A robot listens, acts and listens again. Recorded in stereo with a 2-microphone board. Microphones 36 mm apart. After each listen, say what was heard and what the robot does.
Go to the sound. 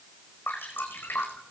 Turn 90° left.
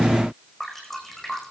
Drive 1.0 m forward.
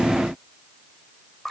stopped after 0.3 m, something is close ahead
Blocked. The dripping is further on, straight ahead.